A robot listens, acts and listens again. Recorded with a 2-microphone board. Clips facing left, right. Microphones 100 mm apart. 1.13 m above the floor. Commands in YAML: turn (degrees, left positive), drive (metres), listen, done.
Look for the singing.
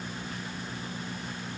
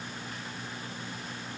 listen: true
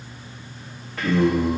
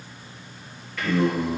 turn: 30
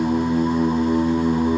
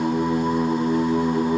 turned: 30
turn: -10
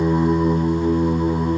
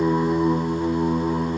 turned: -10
done: "Facing the singing."